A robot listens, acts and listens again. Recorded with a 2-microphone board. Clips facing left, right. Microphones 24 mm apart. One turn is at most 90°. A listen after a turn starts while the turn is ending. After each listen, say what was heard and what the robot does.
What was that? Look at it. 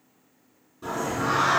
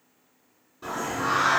Turn 30° right.
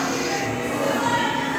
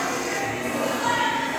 So it is at 15° left. Turn 15° left.
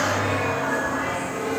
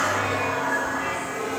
Found it: singing, straight ahead, 1 to 2 m away.